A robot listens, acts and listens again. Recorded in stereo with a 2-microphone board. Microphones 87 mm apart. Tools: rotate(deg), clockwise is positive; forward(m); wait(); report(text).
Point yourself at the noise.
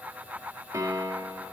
rotate(35)
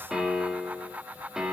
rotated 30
report("Facing the piano, 2 to 4 m away.")